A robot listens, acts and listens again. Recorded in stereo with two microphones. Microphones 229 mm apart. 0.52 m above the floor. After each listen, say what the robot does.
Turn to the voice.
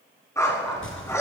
Turn 55° right.
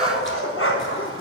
Keep listening.
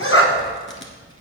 Turn 65° right.
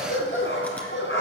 Keep listening.
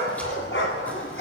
Keep listening.
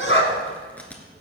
Turn 15° right.
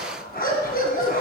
Keep listening.
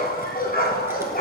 Keep listening.
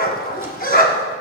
Facing where the child speaking came from. I can't hear it now.